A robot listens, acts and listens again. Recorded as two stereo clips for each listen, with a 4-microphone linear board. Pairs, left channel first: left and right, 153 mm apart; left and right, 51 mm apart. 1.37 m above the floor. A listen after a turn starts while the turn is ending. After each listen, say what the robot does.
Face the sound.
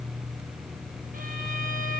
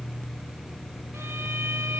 Keep listening.
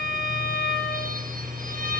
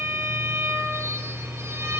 Turn 65° right.
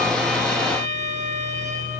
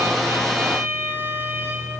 Turn 50° right.
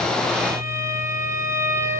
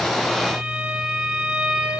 Turn 15° right.
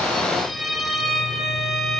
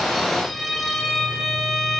Facing the violin, over 4 m away.